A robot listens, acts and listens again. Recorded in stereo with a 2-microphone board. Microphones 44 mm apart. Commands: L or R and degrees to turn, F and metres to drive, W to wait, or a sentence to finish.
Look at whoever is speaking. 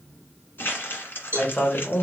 L25
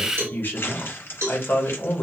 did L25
L130
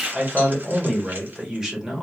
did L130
R15
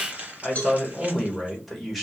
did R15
Found it: a man speaking, straight ahead.